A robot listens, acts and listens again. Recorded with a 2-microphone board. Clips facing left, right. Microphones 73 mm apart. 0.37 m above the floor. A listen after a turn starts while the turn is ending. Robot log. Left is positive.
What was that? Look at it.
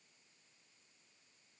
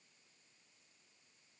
cmd idle
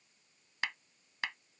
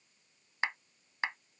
note: The clap: about 30° right or 150° right.
cmd yaw -30
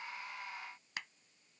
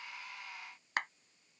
note: So it is at 115° right.
cmd yaw -115
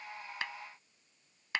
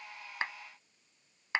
note: The clap is now 25° right.
cmd yaw -25
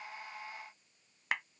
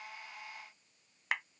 end: Facing the clap.